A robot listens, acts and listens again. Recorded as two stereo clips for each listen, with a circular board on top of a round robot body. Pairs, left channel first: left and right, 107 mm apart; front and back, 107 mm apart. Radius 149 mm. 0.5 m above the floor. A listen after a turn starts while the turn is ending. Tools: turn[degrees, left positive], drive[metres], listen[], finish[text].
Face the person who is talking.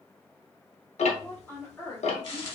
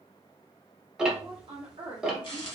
Thought: The woman speaking: 150° left.
Action: turn[150]
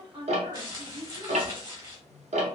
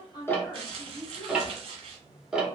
Thought: The woman speaking is now 90° right.
Action: turn[-90]
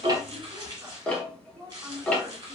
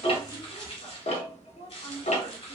Thought: The woman speaking is now 20° right.
Action: turn[-20]
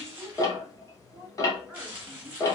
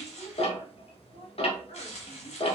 Action: finish[Found it: a woman speaking, straight ahead.]